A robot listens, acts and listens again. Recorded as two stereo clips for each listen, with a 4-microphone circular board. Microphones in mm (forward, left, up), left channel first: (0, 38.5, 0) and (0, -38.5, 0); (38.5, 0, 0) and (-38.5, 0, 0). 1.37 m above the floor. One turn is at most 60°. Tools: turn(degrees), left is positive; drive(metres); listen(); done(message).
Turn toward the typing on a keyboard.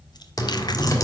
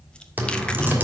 turn(degrees=60)
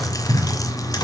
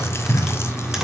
turn(degrees=60)
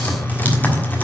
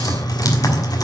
turn(degrees=25)
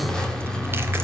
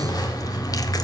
turn(degrees=10)
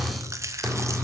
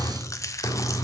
done("Facing the typing on a keyboard, 1 to 2 m away.")